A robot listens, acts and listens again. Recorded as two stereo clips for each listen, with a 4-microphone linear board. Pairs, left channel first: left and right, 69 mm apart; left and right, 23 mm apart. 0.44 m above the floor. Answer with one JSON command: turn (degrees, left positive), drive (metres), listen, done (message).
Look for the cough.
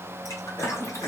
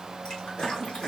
{"turn": 35}
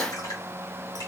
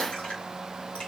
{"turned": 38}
{"listen": true}
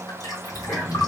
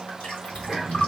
{"done": "Found it: a cough, straight ahead, 1 to 2 m away."}